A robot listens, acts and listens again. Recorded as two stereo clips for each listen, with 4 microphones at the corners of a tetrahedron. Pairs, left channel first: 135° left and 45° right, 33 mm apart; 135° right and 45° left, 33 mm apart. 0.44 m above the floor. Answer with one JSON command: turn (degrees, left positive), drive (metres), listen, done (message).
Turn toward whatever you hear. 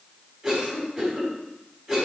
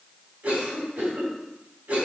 {"turn": 45}
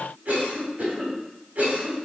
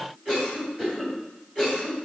{"turn": -20}
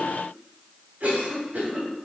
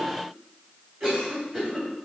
{"turn": -10}
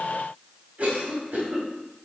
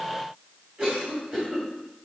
{"done": "Facing the cough, 2 to 4 m away."}